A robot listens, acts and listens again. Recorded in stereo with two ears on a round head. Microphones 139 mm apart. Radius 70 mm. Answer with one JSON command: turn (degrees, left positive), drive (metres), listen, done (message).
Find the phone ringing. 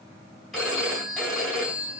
{"turn": 30}
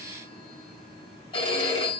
{"turn": 150}
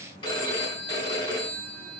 {"turn": 30}
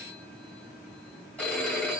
{"turn": 10}
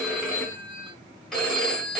{"done": "Found it: a phone ringing, straight ahead."}